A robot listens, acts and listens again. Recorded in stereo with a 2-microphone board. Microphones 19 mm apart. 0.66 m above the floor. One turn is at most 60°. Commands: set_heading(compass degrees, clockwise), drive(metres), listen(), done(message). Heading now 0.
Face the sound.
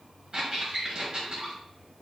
set_heading(50)
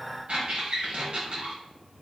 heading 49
set_heading(109)
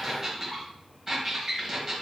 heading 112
set_heading(132)
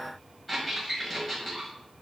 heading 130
done("Facing the squeak.")